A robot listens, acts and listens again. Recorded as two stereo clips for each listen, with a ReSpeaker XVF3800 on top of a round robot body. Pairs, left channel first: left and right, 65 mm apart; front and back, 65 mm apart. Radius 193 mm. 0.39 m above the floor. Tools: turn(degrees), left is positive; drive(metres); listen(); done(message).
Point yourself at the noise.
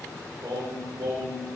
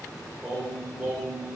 turn(degrees=-100)
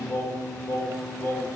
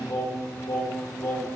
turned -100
turn(degrees=30)
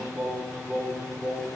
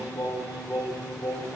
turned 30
turn(degrees=-20)
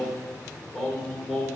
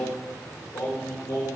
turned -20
done("Facing the singing, 2 to 4 m away.")